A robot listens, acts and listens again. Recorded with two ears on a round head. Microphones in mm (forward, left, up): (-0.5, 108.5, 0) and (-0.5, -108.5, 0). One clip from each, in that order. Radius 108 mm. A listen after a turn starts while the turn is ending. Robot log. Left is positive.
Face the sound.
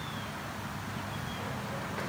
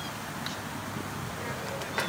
cmd idle
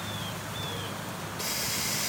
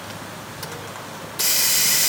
note: The hiss: about 45° right or 135° right.
cmd yaw -45
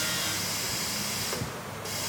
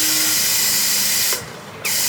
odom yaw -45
note: So it is at 75° right.
cmd yaw -75
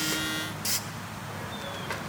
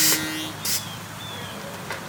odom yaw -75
end: Facing the hiss, 1 to 2 m away.